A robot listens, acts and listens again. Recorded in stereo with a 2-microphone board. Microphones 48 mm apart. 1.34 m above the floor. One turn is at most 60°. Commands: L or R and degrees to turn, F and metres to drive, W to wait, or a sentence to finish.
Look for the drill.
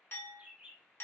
W
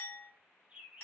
W
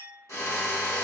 L60
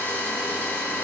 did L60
L35
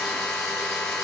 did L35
Found it: a drill, straight ahead, 1 to 2 m away.